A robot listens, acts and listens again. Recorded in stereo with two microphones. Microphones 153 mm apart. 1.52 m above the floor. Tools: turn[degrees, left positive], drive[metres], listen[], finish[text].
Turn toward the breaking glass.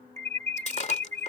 Thought: The breaking glass: about 50° left or 130° left.
Action: turn[50]
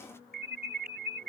Action: listen[]
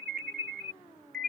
Action: finish[I heard breaking glass, but can't make it out now. It was about straight ahead or 80° left.]